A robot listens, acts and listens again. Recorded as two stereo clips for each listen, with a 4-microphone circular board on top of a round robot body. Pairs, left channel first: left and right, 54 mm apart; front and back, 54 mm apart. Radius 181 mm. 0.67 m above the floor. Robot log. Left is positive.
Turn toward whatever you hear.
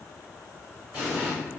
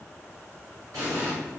note: The explosion: 155° right.
cmd yaw -155
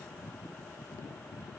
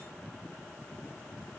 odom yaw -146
note: Nothing new. It was at 10° right.
cmd yaw -10
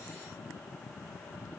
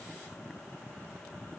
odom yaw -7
end: I heard an explosion from this way, but can't make it out now.